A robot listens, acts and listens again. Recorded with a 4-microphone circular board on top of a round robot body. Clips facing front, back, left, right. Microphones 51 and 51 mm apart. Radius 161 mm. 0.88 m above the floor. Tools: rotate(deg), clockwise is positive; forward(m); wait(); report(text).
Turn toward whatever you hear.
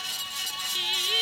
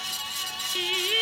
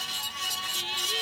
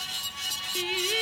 rotate(125)
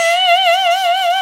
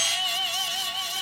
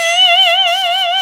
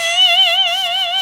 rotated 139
rotate(-20)
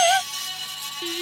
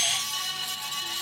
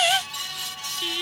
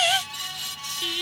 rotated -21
report("Facing the singing.")